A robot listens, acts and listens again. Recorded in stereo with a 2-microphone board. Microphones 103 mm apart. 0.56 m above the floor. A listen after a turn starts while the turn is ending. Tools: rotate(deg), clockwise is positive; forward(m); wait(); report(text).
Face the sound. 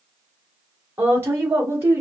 rotate(20)
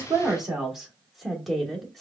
report("Facing the woman speaking, 1 to 2 m away.")